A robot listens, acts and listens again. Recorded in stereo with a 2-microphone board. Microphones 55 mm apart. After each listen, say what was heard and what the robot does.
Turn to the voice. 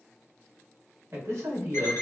The man speaking: about 55° right or 125° right. Turn 55° right.
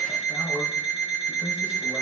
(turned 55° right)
So it is at 65° right. Turn 65° right.
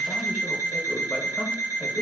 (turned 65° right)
Keep listening.
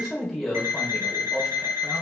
Found it: a man speaking, straight ahead, 1 to 2 m away.